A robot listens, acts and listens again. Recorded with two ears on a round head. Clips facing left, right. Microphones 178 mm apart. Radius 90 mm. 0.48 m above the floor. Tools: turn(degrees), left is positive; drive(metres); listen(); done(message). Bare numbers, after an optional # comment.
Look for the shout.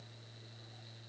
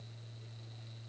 listen()
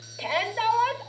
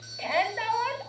# The shout: about 50° left or 130° left.
turn(50)
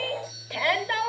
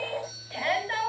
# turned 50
# So it is at 75° left.
turn(75)
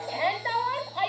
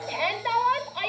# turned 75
# The shout is now 35° right.
turn(-35)
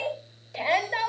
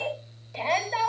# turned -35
# The shout is now 10° left.
turn(10)
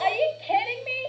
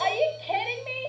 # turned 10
done("Facing the shout.")